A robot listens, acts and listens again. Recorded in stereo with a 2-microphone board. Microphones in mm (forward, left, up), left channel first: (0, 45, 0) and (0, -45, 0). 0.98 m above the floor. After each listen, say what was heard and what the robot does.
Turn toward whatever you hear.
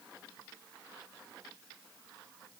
Keep listening.
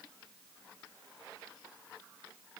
Keep listening.
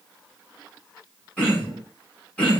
Turn 30° left.
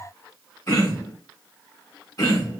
So it is at 135° left. Turn 135° left.
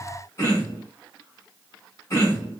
The throat clearing is now 35° left. Turn 35° left.
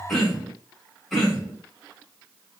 Facing the throat clearing, 2 to 4 m away.